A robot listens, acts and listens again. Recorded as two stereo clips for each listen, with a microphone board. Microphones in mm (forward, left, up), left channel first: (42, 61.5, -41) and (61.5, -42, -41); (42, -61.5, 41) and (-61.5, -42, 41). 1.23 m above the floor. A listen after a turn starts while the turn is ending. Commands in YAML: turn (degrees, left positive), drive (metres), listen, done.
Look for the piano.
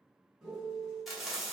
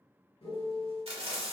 done: "Found it: a piano, straight ahead, 2 to 4 m away."